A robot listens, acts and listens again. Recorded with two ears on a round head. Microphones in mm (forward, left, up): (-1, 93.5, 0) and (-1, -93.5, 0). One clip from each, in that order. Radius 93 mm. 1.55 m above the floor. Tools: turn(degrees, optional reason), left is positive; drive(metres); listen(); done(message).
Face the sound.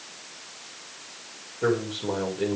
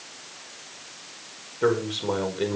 turn(degrees=-40, reason="The man speaking: about 40° right or 140° right.")
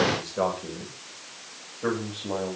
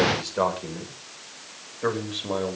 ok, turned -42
turn(degrees=-105, reason="So it is at 105° right.")
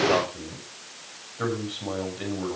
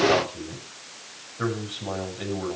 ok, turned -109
done("Facing the man speaking, over 4 m away.")